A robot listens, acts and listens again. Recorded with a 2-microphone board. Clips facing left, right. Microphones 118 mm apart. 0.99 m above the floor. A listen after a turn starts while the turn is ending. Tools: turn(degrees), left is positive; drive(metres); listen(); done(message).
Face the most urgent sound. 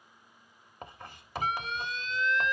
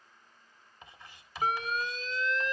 turn(degrees=-40)
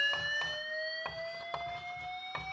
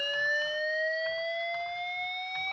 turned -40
turn(degrees=-100)
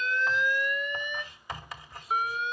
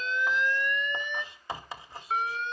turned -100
turn(degrees=10)
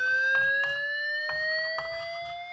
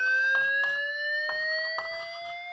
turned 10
done("Facing the alarm.")